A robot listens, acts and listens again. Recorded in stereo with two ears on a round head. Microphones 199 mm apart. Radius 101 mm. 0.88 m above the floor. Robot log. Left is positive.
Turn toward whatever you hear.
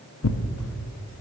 note: The tearing paper: about 65° left or 115° left.
cmd yaw +65
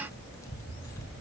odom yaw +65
note: So it is at 15° left.
cmd yaw +15
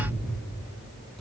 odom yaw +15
cmd idle
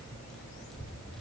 end: Found it: tearing paper, straight ahead, under 1 m away.